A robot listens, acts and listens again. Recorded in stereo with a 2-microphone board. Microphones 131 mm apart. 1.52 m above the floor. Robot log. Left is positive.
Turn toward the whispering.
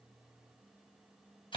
cmd idle
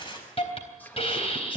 cmd yaw +30
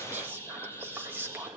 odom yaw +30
note: So it is at 15° right.
cmd yaw -15
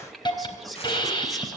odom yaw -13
end: Found it: whispering, straight ahead, 2 to 4 m away.